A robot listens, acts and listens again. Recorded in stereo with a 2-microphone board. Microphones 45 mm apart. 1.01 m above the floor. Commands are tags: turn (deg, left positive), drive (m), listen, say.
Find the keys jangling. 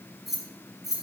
<turn deg="-30"/>
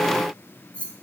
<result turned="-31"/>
<turn deg="30"/>
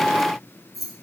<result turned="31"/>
<say>Found it: keys jangling, straight ahead, over 4 m away.</say>